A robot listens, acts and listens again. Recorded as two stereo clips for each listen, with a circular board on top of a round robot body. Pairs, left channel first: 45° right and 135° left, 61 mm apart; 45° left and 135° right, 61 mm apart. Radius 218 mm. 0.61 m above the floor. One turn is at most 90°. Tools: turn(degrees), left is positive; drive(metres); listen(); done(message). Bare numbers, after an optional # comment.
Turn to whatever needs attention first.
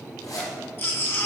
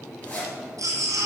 # The baby crying: 100° right.
turn(-90)
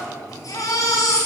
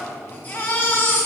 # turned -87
# The baby crying is now 10° right.
turn(-10)
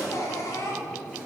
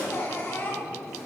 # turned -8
done("Facing the baby crying.")